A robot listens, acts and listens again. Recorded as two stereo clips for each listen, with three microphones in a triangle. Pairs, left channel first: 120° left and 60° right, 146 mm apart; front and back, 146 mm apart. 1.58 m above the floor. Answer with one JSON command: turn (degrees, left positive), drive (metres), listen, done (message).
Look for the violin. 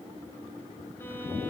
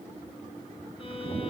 {"listen": true}
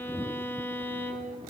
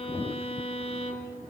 {"turn": 45}
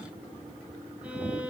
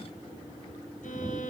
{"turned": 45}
{"listen": true}
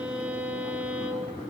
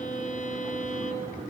{"turn": 20}
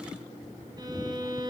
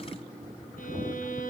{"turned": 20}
{"done": "Found it: a violin, straight ahead, 2 to 4 m away."}